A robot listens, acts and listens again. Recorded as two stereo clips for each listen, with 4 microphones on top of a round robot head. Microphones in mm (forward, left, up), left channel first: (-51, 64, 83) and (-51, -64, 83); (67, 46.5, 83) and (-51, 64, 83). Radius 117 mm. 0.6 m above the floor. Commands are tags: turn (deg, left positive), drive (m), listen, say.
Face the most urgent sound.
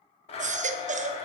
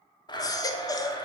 <turn deg="-70"/>
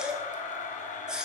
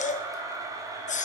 <say>Facing the baby crying, under 1 m away.</say>